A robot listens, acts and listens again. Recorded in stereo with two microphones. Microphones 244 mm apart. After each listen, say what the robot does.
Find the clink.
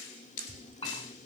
Turn 25° left.
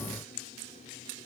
Keep listening.
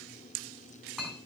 Facing the clink, 2 to 4 m away.